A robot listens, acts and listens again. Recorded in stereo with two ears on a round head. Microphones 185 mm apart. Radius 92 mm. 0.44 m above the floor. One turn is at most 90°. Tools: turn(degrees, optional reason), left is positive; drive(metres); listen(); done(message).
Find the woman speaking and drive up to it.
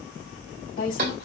turn(degrees=50, reason="The woman speaking: about 50° left or 130° left.")
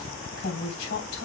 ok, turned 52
turn(degrees=75, reason="So it is at 75° left.")
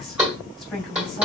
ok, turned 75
drive(metres=1.0)
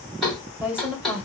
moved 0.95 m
drive(metres=1.0)
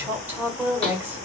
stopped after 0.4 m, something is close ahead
turn(degrees=-10, reason="The woman speaking is now 10° right.")
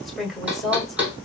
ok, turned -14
done("I am next to the woman speaking.")